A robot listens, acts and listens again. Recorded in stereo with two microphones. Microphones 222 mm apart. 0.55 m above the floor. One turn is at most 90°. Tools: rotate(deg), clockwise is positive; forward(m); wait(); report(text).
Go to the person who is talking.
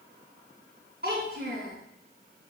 rotate(50)
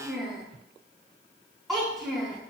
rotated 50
forward(1.0)
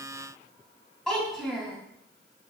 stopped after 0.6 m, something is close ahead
report("Blocked. The child speaking is further on, straight ahead.")